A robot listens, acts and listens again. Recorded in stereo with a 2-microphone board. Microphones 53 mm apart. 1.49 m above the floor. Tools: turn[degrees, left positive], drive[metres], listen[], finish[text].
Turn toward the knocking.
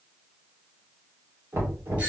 Thought: The knocking: about 70° right or 110° right.
Action: turn[-70]
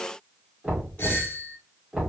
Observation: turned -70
Thought: So it is at 20° right.
Action: turn[-20]
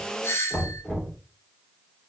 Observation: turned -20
Action: finish[Found it: knocking, straight ahead.]